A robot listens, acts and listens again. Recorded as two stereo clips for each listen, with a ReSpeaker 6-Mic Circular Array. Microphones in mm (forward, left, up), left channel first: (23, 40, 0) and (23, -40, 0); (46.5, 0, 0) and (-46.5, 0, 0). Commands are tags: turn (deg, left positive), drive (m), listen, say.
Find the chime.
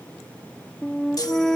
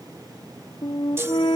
<turn deg="120"/>
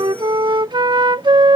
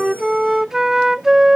<listen/>
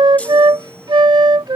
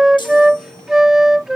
<turn deg="20"/>
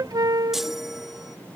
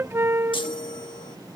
<say>Found it: a chime, straight ahead.</say>